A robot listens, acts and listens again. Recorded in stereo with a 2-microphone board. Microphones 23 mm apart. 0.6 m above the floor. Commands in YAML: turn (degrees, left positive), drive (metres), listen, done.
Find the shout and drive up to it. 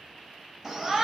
turn: -30
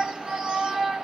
turn: -140
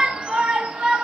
turn: -55
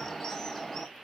turn: 15
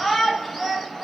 drive: 1.0
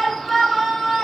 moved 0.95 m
drive: 1.0
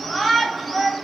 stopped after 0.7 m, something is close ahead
turn: -10
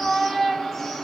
done: "I am next to the shout."